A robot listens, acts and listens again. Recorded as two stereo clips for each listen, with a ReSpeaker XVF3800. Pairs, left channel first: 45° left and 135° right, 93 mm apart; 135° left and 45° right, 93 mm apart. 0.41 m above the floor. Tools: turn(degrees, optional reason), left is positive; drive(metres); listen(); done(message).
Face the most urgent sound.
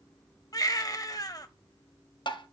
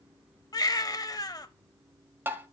turn(degrees=90, reason="The baby crying: 90° left.")
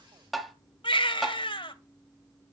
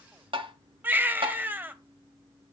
turn(degrees=25, reason="The baby crying is now 25° left.")
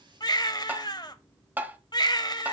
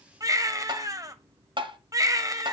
done("Facing the baby crying.")